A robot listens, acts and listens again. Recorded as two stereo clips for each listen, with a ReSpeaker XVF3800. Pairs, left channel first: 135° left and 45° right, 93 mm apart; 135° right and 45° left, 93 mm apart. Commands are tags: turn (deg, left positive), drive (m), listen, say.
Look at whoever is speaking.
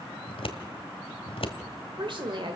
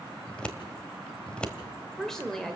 <turn deg="-50"/>
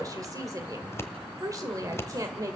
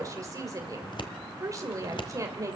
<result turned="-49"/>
<say>Found it: a woman speaking, straight ahead.</say>